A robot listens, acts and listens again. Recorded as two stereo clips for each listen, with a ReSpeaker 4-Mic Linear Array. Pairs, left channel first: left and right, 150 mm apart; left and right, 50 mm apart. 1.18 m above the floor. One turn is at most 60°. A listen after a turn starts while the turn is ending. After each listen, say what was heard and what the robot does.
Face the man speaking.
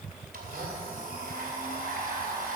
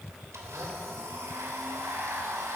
Keep listening.
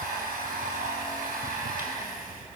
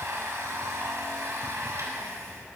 Keep listening.
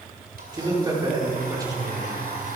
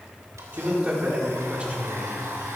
The man speaking: about 25° right or 155° right. Turn 25° right.
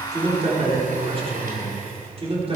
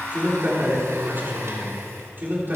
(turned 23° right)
So it is at 135° right. Turn 60° right.
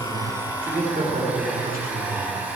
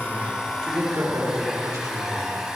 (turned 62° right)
The man speaking is now 75° right. Turn 60° right.
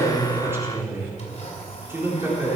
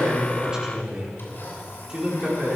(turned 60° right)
The man speaking is now 15° right. Turn 15° right.
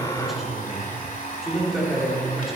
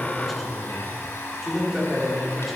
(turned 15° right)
Found it: a man speaking, straight ahead.